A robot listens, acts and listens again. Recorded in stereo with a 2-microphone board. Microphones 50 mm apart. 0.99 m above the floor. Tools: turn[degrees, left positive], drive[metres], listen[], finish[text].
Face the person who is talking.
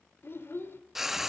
Thought: The child speaking: about 50° left or 130° left.
Action: turn[50]
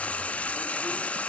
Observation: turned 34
Action: listen[]
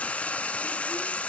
Action: listen[]
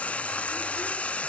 Action: finish[I heard a child speaking, but can't make it out now. It was about 20° left or 95° left.]